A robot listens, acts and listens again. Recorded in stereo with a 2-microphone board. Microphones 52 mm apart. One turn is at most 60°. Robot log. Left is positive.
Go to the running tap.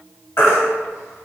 cmd idle
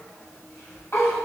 cmd idle
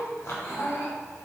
end: I can't make out a running tap, only a baby crying.